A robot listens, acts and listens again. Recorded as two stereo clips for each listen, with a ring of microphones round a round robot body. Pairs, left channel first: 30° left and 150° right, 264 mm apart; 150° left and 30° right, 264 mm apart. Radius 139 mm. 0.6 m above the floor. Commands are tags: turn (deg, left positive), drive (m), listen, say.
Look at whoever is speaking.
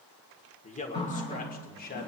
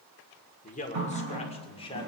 <turn deg="80"/>
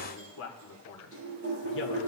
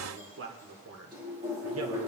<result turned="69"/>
<say>Found it: a man speaking, straight ahead, 2 to 4 m away.</say>